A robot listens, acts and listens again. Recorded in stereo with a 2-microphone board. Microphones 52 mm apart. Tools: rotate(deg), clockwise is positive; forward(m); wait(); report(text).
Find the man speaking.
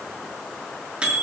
wait()
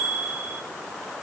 wait()
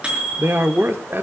rotate(45)
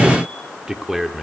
report("Facing the man speaking.")